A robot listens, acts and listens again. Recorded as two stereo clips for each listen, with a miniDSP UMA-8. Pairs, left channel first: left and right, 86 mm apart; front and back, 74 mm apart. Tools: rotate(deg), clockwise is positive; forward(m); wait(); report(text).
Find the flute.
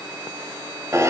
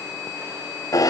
wait()
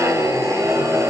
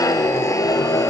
wait()
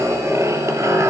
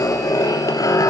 report("I can't make out a flute, only a zipper.")